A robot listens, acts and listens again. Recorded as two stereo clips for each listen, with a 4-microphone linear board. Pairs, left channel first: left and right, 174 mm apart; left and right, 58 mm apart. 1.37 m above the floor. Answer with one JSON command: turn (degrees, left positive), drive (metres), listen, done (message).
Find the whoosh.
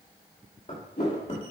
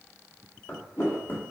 {"turn": 90}
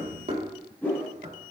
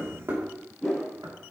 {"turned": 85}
{"turn": 10}
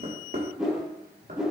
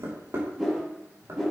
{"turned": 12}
{"done": "Found it: a whoosh, straight ahead."}